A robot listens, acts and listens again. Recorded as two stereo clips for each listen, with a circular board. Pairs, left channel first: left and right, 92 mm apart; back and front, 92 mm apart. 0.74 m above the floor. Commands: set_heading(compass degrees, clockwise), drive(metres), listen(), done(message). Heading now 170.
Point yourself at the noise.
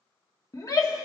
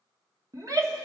set_heading(125)
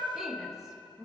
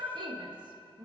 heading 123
done("Facing the shout, 1 to 2 m away.")